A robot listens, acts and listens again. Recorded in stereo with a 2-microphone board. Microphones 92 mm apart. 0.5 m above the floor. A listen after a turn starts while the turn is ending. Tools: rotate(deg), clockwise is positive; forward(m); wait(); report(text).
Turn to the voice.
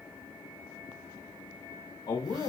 rotate(-60)
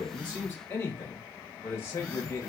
rotate(-35)
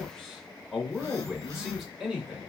report("Facing the man speaking.")